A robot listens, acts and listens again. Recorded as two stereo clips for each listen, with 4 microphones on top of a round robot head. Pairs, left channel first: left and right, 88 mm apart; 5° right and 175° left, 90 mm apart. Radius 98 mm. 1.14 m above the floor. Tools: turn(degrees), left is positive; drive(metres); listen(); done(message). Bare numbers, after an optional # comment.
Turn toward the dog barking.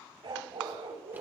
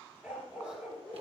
# The dog barking: 105° right.
turn(-105)
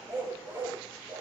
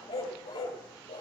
# The dog barking is now 25° right.
turn(-25)
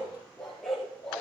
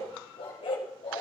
# The dog barking is now 10° left.
turn(10)
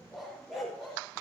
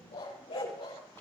done("Found it: a dog barking, straight ahead, over 4 m away.")